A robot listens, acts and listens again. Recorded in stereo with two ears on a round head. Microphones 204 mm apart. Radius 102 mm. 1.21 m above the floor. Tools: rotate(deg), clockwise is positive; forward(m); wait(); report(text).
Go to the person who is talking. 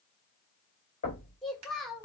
rotate(-30)
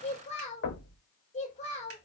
rotate(-150)
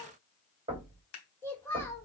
rotate(-10)
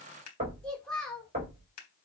forward(1.0)
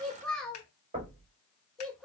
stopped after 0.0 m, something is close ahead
report("Something is in my way. I am facing the child speaking but have not reached it.")